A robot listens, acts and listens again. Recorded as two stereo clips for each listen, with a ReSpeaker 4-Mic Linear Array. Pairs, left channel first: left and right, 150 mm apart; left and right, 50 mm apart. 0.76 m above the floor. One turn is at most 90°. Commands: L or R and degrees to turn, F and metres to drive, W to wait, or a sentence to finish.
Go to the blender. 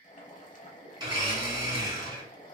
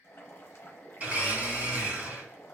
R30
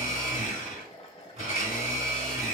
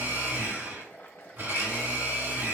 R90
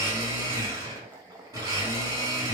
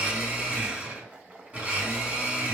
R30
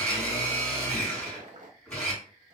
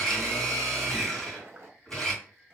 L10
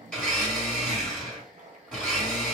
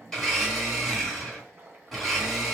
F1.0
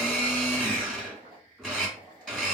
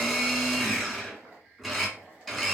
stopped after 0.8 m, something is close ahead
Arrived at the blender, straight ahead.